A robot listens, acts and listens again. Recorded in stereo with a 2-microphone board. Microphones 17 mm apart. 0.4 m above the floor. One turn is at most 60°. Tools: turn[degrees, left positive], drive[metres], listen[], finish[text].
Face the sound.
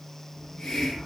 Thought: The hiss: about 60° left or 120° left.
Action: turn[60]
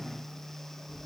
Action: finish[Facing the hiss, over 4 m away.]